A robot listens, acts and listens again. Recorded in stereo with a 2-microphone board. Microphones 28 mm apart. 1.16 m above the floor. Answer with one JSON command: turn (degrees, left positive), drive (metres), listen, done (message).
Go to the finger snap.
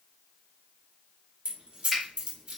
{"turn": -20}
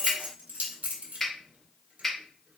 {"drive": 1.0}
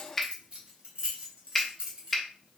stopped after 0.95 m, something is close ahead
{"done": "Arrived at the finger snap, straight ahead."}